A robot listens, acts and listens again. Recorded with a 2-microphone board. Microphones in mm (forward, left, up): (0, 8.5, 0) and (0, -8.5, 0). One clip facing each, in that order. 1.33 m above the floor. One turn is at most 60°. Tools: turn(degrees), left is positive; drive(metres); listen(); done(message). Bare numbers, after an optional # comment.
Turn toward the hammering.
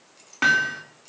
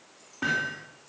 # The hammering: about 70° left or 110° left.
turn(60)
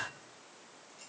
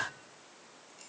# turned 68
listen()
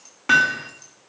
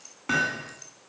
# So it is at 30° left.
turn(30)
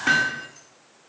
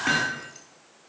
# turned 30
done("Facing the hammering, 2 to 4 m away.")